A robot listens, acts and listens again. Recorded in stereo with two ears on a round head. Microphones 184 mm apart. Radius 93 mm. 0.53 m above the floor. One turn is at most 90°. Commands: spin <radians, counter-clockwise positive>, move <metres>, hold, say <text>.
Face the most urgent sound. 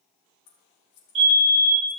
spin -0.52
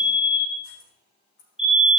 say Found it: a fire alarm, straight ahead.